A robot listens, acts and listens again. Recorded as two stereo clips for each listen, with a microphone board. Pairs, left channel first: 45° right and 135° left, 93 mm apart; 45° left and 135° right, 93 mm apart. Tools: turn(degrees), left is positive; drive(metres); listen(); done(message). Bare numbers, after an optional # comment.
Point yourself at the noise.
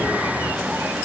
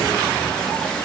listen()
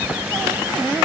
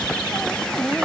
listen()
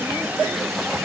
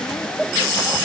done("I can't make out anything to turn to.")